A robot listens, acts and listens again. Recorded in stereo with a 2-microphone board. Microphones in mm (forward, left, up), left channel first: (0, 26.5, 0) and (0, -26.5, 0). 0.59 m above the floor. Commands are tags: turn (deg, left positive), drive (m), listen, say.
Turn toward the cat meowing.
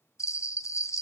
<listen/>
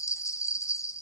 <listen/>
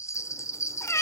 <turn deg="55"/>
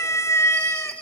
<turn deg="65"/>
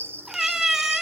<turn deg="-10"/>
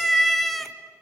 <say>Facing the cat meowing.</say>